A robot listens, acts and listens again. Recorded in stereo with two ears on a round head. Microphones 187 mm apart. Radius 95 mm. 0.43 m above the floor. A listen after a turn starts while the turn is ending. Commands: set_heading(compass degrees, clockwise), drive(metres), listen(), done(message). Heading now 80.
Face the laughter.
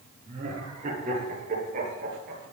set_heading(120)
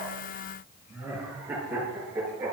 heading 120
set_heading(130)
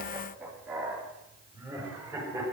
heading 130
set_heading(140)
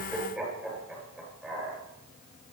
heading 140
done("Facing the laughter, over 4 m away.")